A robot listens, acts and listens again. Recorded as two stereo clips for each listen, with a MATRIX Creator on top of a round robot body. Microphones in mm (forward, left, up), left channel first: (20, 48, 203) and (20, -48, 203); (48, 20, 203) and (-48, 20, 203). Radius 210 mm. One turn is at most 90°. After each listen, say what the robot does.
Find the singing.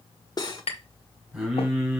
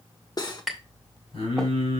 Facing the singing.